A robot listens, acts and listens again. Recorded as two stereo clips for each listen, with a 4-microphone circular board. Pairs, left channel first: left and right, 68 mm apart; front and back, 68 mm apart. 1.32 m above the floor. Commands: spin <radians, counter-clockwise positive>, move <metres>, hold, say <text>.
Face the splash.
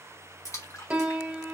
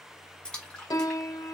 spin 1.31
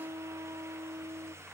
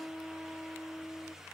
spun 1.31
say Facing where the splash came from. I can't hear it now.